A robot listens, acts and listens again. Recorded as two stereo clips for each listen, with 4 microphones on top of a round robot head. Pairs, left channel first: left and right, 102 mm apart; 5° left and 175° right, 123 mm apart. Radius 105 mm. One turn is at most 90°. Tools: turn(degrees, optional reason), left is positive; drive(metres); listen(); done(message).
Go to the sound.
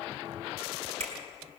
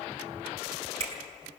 turn(degrees=-90, reason="The finger snap: 125° right.")
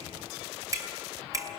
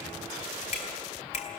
turn(degrees=-30, reason="The finger snap is now 30° right.")
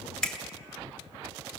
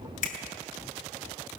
drive(metres=1.0)
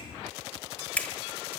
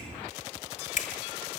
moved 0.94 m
turn(degrees=15, reason="The finger snap is now 15° left.")
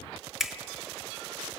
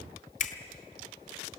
drive(metres=1.0)
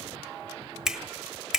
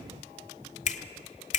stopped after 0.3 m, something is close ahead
done("I am next to the finger snap.")